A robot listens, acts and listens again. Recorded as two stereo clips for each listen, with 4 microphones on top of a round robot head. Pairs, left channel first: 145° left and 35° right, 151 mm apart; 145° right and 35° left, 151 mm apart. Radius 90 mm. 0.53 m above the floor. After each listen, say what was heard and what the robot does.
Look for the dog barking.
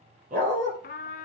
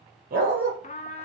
Facing the dog barking, over 4 m away.